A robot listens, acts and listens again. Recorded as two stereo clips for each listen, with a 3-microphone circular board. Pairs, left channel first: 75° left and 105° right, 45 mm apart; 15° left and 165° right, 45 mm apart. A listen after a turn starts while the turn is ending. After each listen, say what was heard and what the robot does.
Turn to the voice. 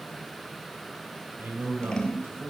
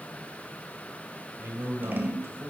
The man speaking: 135° right. Turn 135° right.
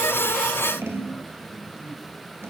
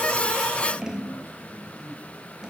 Keep listening.
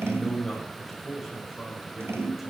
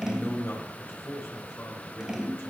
The man speaking is now 15° right. Turn 15° right.
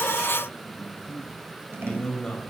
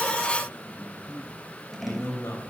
Found it: a man speaking, straight ahead, over 4 m away.